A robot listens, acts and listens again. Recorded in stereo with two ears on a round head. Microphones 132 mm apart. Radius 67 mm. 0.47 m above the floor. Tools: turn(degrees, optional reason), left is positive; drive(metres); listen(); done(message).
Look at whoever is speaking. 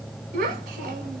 turn(degrees=-60, reason="The child speaking: about 60° right or 120° right.")
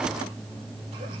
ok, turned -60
listen()
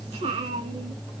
turn(degrees=-45, reason="So it is at 45° right.")
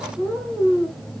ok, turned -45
done("Facing the child speaking, 1 to 2 m away.")